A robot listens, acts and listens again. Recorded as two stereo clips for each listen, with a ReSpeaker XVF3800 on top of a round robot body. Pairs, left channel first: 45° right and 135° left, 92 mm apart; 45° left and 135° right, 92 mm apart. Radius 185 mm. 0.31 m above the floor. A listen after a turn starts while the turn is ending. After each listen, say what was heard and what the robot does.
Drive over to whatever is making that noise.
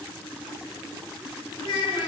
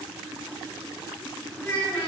The child speaking: 20° right. Turn 20° right.
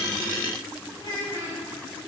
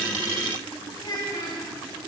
Drive 1.0 m forward.
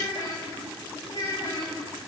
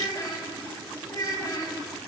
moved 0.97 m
Drive 1.0 m forward.
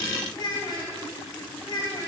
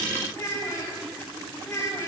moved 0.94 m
The child speaking is now 10° right. Turn 10° right.
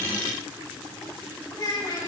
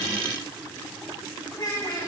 Drive 1.0 m forward.
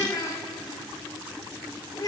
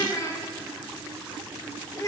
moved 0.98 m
Drive 1.0 m forward.
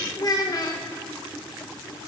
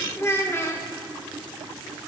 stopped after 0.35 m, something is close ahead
The child speaking is now 10° right. Turn 10° right.
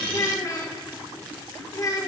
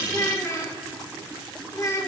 I am next to the child speaking.